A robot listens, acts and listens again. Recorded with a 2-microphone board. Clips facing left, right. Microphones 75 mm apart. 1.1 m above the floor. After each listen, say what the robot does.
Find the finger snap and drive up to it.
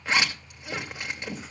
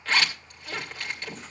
Keep listening.
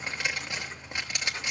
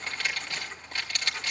Keep listening.
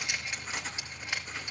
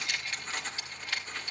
I can't make out a finger snap, only writing and a zipper.